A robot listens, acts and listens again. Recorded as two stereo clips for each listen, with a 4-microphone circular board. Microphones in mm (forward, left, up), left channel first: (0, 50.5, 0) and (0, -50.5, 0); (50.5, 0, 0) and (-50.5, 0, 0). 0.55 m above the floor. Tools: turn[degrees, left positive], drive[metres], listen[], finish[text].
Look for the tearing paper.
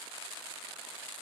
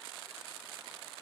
Action: listen[]
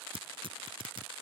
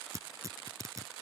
Thought: The tearing paper: 125° right.
Action: turn[-125]
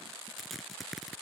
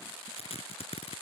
Action: finish[Facing the tearing paper.]